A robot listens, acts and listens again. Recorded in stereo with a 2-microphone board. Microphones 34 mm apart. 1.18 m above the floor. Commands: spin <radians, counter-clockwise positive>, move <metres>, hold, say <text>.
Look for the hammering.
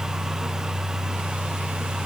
hold
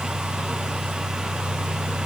hold
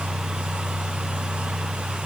say I can't make out hammering.